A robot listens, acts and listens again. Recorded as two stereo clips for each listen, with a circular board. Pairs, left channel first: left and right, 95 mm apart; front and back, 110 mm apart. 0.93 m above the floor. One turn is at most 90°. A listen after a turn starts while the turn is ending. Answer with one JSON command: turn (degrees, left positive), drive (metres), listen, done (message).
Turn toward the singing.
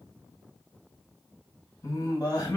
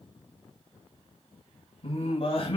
{"turn": 40}
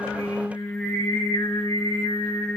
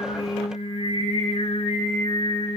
{"turn": 30}
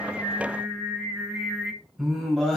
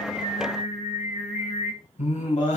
{"done": "Facing the singing."}